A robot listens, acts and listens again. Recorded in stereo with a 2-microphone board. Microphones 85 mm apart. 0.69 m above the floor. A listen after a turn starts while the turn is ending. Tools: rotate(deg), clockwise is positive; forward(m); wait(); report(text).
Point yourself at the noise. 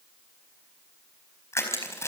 rotate(-35)
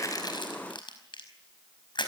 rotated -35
rotate(-110)
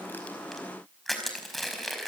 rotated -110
report("Facing the crushing, over 4 m away.")